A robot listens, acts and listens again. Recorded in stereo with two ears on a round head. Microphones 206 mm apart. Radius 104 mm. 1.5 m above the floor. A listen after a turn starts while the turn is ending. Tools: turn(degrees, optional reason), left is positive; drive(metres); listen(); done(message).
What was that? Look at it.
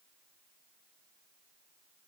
listen()
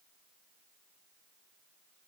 listen()
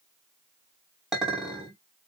turn(degrees=30)
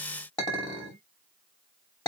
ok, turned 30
turn(degrees=155, reason="So it is at 155° left.")
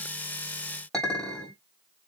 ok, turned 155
done("Found it: a clink, straight ahead, 2 to 4 m away.")